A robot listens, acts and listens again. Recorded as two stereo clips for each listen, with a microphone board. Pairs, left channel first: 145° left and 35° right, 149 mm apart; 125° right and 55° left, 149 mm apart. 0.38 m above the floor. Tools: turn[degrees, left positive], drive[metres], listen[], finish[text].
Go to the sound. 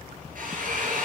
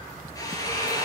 Thought: The drill: 55° right.
Action: turn[-55]
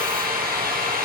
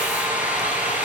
Thought: The drill is now 20° right.
Action: turn[-20]
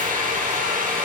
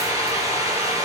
Thought: The drill is now 10° right.
Action: turn[-10]
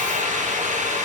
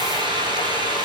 Action: drive[1.0]
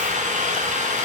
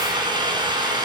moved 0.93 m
Action: drive[1.0]
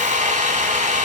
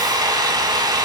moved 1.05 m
Action: drive[1.0]
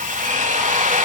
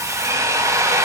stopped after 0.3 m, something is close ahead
Thought: The drill is now 10° right.
Action: turn[-10]
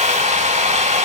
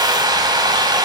Action: finish[I am next to the drill.]